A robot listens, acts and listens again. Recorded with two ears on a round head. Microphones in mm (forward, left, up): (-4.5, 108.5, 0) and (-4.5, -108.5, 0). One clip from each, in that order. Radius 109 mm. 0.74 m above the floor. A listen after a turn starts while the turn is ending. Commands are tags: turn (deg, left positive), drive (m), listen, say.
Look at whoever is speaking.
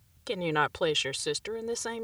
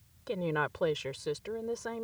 <turn deg="70"/>
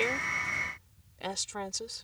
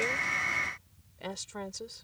<turn deg="30"/>
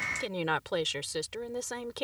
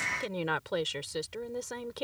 <turn deg="20"/>
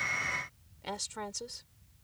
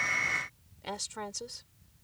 <say>Facing the woman speaking.</say>